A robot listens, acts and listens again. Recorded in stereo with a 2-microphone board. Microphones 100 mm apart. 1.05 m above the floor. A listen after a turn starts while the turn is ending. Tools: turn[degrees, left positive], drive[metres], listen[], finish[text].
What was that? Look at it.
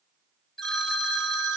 Action: turn[30]
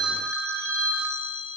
Thought: So it is at 30° right.
Action: turn[-30]
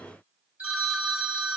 Thought: The phone ringing is now 15° right.
Action: turn[-15]
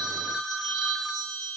Action: finish[Found it: a phone ringing, straight ahead.]